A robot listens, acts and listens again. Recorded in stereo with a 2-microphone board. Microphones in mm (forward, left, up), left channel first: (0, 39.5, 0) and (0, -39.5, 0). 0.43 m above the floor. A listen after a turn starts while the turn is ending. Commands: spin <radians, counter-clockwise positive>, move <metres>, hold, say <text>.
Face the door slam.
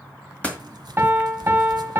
spin 0.26
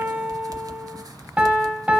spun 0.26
hold
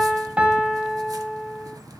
say I heard a door slam, but can't make it out now. It was about straight ahead or 150° left.